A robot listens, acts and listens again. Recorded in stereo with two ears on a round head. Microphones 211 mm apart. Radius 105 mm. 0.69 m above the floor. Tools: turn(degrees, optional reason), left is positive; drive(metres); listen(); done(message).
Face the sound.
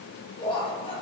turn(degrees=25, reason="The laughter: about 25° left or 155° left.")
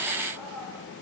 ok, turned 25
done("Found it: laughter, straight ahead.")